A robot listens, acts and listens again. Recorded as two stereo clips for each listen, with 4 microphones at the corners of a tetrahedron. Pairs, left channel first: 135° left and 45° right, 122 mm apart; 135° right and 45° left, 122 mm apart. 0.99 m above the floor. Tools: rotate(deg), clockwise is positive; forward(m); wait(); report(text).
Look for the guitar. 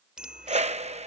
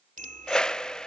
wait()
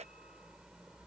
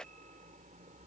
wait()
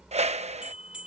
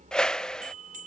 report("I can't make out a guitar to turn to.")